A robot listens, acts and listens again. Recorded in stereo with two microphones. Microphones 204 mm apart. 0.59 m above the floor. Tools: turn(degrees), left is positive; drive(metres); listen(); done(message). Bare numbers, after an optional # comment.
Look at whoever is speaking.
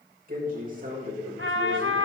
# The man speaking: about 45° right or 135° right.
turn(-45)
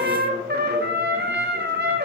listen()
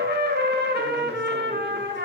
listen()
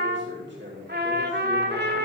# So it is at 85° right.
turn(-85)
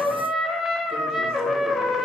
listen()
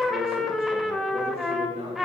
# The man speaking is now 30° right.
turn(-30)
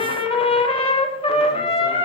listen()
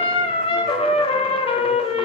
listen()
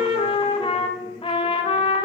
done("Facing where the man speaking came from. I can't hear it now.")